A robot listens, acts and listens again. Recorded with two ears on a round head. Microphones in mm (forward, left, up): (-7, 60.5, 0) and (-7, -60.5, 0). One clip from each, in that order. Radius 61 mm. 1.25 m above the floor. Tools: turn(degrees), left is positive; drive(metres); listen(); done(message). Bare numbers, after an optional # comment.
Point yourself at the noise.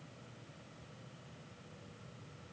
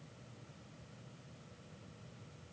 listen()
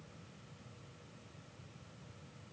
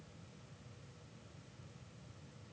listen()
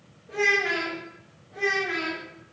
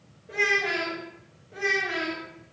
# The child speaking: about 50° right or 130° right.
turn(-50)
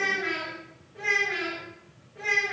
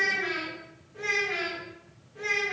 # So it is at 65° right.
turn(-65)
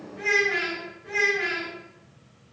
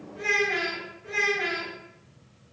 # The child speaking is now 20° right.
turn(-20)
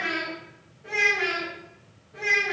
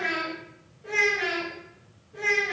done("Found it: a child speaking, straight ahead.")